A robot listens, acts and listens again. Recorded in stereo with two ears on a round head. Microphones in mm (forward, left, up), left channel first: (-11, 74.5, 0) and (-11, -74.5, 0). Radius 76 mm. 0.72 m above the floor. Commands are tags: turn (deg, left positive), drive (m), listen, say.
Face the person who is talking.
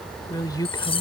<turn deg="25"/>
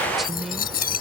<listen/>
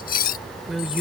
<say>Facing the woman speaking.</say>